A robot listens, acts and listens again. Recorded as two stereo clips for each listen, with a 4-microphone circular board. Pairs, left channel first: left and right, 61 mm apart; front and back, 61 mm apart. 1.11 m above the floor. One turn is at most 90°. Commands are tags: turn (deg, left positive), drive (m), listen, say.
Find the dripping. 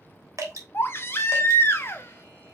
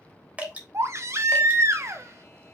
<turn deg="-90"/>
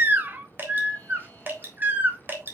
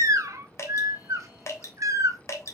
<turn deg="-40"/>
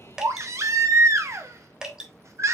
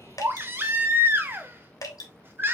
<turn deg="-15"/>
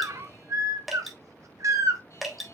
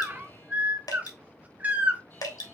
<say>Found it: dripping, straight ahead, 1 to 2 m away.</say>